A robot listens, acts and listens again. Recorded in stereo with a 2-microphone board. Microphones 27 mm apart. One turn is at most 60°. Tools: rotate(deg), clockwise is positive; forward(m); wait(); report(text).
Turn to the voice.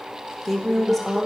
rotate(-30)
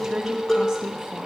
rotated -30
rotate(25)
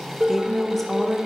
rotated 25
report("Facing the woman speaking, 1 to 2 m away.")